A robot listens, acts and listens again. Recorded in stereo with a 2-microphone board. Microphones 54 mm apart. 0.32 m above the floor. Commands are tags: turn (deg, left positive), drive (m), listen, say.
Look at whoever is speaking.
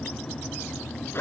<listen/>
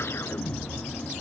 <listen/>
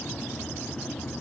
<say>I can't make out anyone speaking to turn to.</say>